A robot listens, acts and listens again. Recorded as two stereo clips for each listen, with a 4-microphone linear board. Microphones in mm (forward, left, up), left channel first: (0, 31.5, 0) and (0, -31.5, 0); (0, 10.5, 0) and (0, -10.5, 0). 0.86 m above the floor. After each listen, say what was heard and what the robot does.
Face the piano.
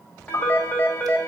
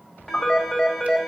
Turn 90° left.
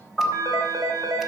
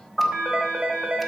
Facing the piano, over 4 m away.